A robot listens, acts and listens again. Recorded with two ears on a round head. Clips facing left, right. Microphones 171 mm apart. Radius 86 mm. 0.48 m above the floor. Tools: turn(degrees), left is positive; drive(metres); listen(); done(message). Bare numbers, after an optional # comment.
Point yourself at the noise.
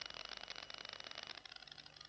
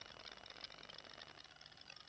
listen()
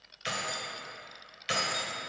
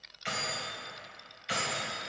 # The keys jangling: about 55° left or 125° left.
turn(55)
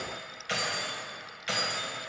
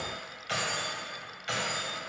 # So it is at 30° left.
turn(30)
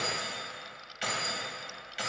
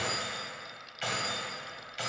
# The keys jangling is now 15° left.
turn(15)
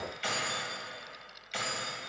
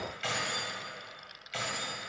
done("Facing the keys jangling.")